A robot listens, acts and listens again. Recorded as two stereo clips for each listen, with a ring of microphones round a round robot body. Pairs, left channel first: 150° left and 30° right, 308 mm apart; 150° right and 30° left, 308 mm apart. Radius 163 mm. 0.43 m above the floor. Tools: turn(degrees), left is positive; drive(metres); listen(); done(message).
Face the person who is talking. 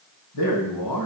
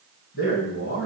turn(degrees=155)
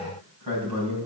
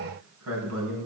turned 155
turn(degrees=-10)
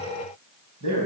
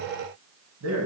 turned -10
done("Found it: a man speaking, straight ahead, 2 to 4 m away.")